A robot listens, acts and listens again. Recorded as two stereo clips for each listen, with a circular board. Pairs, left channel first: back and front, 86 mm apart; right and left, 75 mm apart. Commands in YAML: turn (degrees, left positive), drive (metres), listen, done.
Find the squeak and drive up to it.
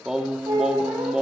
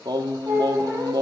turn: 35
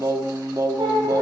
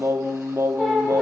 drive: 1.0
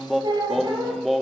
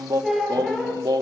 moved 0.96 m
drive: 1.0
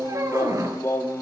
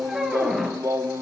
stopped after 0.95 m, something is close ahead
done: "Arrived at the squeak, straight ahead."